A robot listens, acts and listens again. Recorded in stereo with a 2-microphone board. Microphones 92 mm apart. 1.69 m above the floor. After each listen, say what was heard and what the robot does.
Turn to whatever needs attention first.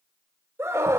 The scream: about 25° right or 155° right. Turn 25° right.
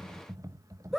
Found it: a scream, straight ahead.